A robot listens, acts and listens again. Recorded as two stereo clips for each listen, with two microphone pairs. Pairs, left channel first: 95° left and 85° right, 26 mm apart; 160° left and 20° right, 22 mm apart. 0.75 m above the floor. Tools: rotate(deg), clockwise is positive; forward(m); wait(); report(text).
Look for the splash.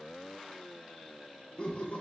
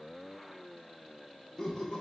wait()
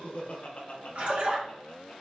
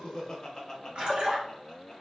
rotate(60)
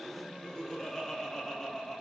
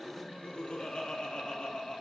report("Facing where the splash came from. I can't hear it now.")